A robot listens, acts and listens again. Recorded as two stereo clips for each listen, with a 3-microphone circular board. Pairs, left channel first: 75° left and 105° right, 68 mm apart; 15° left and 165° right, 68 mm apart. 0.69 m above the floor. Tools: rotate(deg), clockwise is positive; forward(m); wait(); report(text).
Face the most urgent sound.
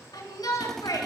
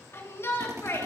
rotate(-65)
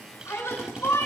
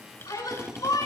rotate(-30)
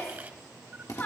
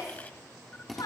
rotate(-15)
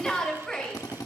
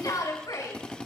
report("Found it: a shout, straight ahead.")